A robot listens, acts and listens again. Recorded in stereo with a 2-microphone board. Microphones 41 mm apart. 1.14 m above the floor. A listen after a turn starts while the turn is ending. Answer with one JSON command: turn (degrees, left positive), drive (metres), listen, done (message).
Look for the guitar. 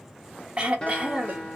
{"turn": 25}
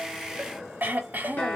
{"turn": 125}
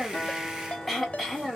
{"listen": true}
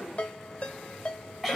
{"listen": true}
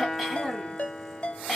{"done": "Facing the guitar."}